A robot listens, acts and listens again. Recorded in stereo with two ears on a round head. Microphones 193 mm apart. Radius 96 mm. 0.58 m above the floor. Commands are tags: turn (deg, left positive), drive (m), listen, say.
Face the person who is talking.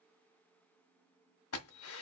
<listen/>
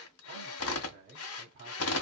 <turn deg="-45"/>
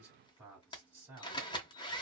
<say>Found it: a man speaking, straight ahead, 1 to 2 m away.</say>